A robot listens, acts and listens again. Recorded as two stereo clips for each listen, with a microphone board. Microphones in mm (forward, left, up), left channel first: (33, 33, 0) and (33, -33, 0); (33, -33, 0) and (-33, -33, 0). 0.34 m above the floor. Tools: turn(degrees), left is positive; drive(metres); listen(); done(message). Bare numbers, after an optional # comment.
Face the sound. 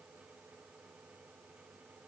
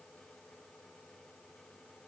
listen()
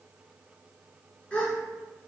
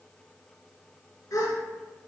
# The gasp: 20° left.
turn(20)
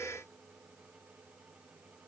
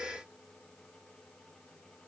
done("Facing where the gasp came from. I can't hear it now.")